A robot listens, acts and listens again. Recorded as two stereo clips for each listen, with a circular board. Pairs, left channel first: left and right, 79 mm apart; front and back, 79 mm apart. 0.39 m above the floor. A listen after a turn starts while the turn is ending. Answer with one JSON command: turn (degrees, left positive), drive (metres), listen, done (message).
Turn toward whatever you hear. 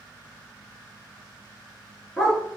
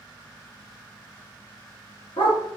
{"done": "Facing the dog barking, 1 to 2 m away."}